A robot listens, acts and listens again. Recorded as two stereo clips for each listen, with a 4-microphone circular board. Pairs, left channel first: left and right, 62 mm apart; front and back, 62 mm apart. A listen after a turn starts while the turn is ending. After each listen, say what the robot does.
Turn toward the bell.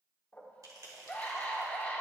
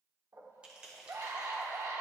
Keep listening.
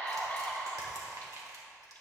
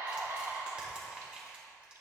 Keep listening.
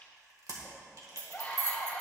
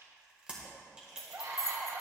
Turn 30° right.
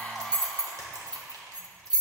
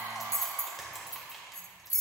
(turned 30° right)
Turn 15° right.
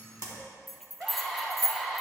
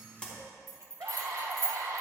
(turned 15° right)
Facing the bell.